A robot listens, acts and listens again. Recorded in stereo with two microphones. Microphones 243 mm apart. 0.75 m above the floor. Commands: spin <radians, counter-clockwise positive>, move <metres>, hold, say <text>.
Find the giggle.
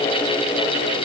hold
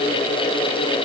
hold
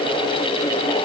say I can't make out a giggle.